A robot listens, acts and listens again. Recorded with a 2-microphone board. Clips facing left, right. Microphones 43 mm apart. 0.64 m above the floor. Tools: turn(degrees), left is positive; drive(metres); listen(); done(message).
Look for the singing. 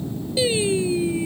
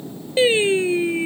turn(degrees=-40)
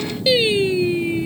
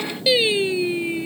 done("Facing the singing.")